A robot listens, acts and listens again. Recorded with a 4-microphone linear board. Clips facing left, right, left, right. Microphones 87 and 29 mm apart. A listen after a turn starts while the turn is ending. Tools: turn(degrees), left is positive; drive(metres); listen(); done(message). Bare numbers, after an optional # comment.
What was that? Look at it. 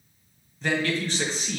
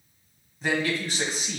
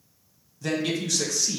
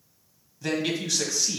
turn(-30)
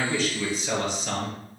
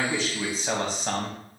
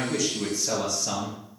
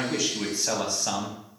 # So it is at 140° right.
turn(-140)
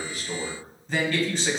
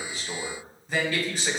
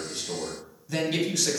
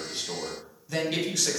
# The man speaking is now 10° right.
turn(-10)
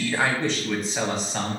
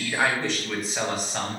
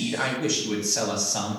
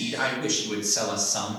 done("Facing the man speaking, 1 to 2 m away.")